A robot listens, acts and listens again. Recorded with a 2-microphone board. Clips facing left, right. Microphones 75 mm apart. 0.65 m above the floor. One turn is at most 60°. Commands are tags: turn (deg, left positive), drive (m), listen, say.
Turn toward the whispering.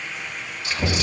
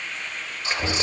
<turn deg="-30"/>
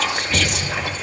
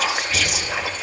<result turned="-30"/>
<say>Found it: whispering, straight ahead.</say>